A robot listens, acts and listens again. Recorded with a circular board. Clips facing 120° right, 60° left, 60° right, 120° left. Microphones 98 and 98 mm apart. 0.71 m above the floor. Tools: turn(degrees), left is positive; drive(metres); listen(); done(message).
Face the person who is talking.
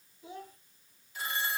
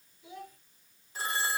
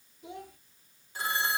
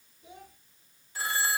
turn(degrees=-65)
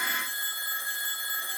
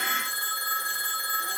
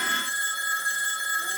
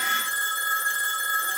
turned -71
listen()
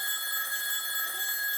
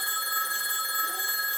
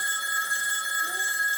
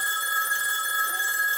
listen()
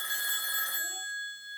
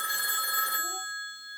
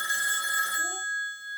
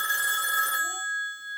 done("Facing where the child speaking came from. I can't hear it now.")